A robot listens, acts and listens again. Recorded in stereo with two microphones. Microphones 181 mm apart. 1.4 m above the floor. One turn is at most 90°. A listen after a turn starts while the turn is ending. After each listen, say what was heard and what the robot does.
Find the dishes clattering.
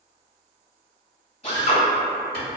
Keep listening.
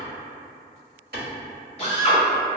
Keep listening.
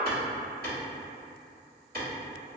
I can't make out dishes clattering to turn to.